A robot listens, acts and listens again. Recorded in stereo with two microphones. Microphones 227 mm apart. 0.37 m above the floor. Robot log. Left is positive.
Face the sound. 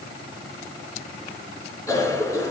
cmd yaw +30
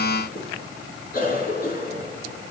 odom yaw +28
note: So it is at 140° left.
cmd yaw +140
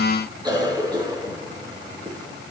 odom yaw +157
note: The cough is now 20° right.
cmd yaw -20
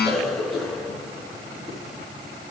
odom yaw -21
end: Facing the cough, 2 to 4 m away.